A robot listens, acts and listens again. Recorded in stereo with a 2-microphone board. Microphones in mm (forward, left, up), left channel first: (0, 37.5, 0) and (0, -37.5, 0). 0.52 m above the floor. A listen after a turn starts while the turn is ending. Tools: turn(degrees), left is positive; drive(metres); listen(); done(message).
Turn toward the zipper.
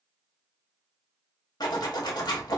turn(degrees=70)
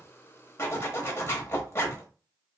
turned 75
turn(degrees=35)
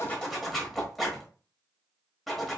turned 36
done("Found it: a zipper, straight ahead, under 1 m away.")